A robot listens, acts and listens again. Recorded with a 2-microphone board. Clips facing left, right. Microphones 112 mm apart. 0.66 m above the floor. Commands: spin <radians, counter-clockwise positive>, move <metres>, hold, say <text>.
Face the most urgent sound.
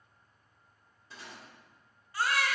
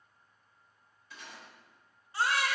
spin -0.44
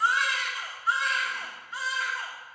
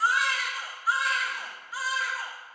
say Facing the baby crying, under 1 m away.